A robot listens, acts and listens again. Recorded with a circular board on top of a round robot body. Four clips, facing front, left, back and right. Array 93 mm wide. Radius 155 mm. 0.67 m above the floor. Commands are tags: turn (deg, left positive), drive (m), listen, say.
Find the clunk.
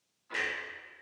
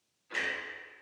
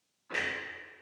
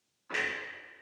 <turn deg="-105"/>
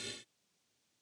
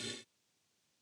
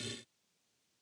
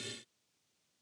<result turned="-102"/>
<say>I heard a clunk from this way, but can't make it out now.</say>